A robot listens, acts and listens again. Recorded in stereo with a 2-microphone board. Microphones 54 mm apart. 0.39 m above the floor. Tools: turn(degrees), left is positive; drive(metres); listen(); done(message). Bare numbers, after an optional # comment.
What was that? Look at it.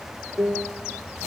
# The piano: about 75° right or 105° right.
turn(-75)
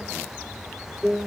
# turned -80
done("Found it: a piano, straight ahead.")